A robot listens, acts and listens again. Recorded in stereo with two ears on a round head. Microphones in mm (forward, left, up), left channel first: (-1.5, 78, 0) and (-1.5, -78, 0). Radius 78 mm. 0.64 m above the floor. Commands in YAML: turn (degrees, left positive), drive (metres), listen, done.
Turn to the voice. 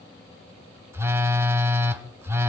listen: true
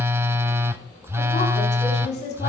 turn: 40
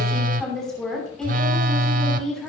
done: "Found it: a woman speaking, straight ahead."